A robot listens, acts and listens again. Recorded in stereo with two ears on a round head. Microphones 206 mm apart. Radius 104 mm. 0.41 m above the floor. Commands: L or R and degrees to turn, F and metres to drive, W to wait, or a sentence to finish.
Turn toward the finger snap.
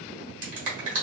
R35
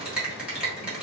Facing the finger snap, 1 to 2 m away.